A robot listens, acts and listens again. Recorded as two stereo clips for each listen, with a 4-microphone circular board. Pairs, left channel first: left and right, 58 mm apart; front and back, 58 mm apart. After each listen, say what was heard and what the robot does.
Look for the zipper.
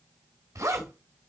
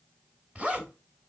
The zipper: 110° right. Turn 110° right.
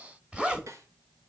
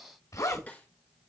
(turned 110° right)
The zipper is now 15° right. Turn 15° right.
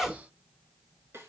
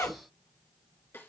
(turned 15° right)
Found it: a zipper, straight ahead, 1 to 2 m away.